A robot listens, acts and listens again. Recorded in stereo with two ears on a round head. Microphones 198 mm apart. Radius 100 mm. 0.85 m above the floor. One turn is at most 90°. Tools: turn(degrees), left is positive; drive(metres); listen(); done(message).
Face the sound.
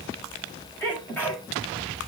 turn(degrees=30)
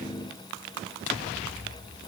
listen()
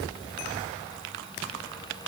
done("I heard a sneeze, but can't make it out now. It was about 20° right or 140° left.")